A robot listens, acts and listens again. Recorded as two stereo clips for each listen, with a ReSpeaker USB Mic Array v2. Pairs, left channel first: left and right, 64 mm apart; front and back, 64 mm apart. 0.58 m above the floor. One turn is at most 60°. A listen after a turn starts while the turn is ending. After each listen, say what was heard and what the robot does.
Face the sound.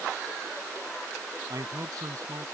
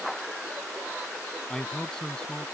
The man speaking: 80° right. Turn 60° right.
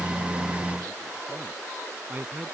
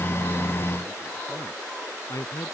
The man speaking is now 25° right. Turn 25° right.
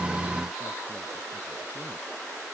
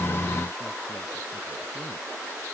Keep listening.
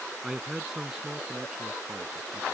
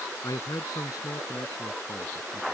The man speaking is now 10° right. Turn 10° right.
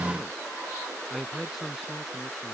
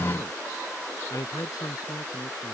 Found it: a man speaking, straight ahead.